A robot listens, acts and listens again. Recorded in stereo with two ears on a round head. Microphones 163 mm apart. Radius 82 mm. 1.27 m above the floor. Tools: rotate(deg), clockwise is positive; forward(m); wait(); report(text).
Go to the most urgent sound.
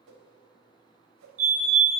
rotate(45)
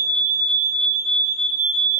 forward(1.0)
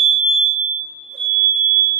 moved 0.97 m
forward(1.0)
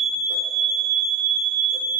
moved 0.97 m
forward(1.0)
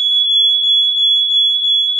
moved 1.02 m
forward(1.0)
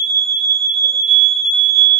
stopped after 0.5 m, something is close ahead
report("I am next to the fire alarm.")